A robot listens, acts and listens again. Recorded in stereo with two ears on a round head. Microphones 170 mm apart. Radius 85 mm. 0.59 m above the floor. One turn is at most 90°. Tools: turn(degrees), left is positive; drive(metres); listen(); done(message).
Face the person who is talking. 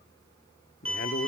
turn(degrees=45)
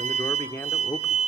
turn(degrees=15)
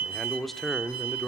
done("Found it: a man speaking, straight ahead, 1 to 2 m away.")